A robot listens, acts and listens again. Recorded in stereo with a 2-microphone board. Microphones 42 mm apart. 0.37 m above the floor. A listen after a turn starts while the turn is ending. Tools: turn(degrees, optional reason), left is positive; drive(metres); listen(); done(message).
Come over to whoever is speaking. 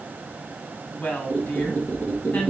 turn(degrees=60, reason="The woman speaking: about 60° left or 120° left.")
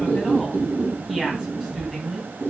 turn(degrees=15, reason="So it is at 15° left.")
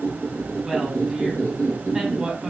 drive(metres=1.0)
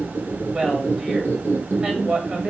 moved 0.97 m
turn(degrees=-10, reason="The woman speaking is now 10° right.")
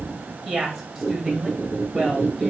drive(metres=1.0)
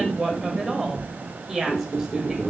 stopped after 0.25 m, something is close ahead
done("I am next to the woman speaking.")